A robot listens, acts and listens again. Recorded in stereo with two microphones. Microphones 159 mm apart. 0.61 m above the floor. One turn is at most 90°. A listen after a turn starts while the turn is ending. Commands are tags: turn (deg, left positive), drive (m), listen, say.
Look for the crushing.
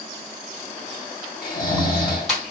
<turn deg="30"/>
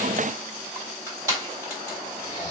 <turn deg="-25"/>
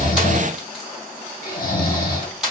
<say>Facing the crushing, 1 to 2 m away.</say>